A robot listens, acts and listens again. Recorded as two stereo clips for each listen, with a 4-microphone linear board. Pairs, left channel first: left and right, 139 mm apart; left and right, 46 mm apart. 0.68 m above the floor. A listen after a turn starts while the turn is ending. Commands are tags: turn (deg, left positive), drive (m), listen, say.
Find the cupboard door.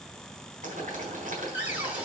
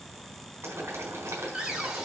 <turn deg="-30"/>
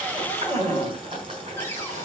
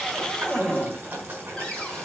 <turn deg="15"/>
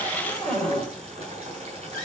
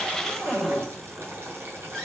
<say>Facing the cupboard door.</say>